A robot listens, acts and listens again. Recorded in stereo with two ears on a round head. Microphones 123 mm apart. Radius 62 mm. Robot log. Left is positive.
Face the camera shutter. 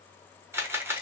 note: The camera shutter: about 15° right or 165° right.
cmd yaw -15
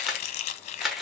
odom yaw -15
end: Facing the camera shutter, 1 to 2 m away.